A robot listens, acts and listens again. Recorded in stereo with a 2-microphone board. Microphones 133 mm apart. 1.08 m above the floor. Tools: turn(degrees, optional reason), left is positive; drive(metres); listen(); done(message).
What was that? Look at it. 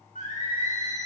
turn(degrees=90)
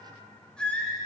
turn(degrees=10, reason="So it is at 10° left.")
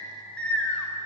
turn(degrees=15, reason="The singing is now 15° left.")
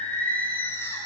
turn(degrees=20, reason="The singing is now 20° left.")
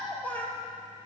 turn(degrees=15, reason="The singing is now 15° left.")
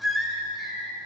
done("Found it: singing, straight ahead, 2 to 4 m away.")